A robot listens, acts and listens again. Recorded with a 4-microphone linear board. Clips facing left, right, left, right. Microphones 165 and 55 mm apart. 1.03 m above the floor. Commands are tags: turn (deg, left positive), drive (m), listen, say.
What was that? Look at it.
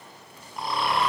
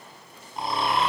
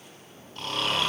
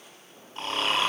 <turn deg="-25"/>
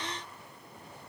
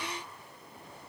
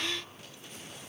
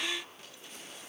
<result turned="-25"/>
<listen/>
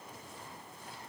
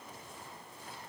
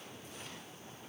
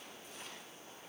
<listen/>
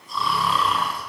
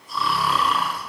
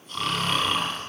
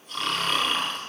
<say>Facing the snoring, over 4 m away.</say>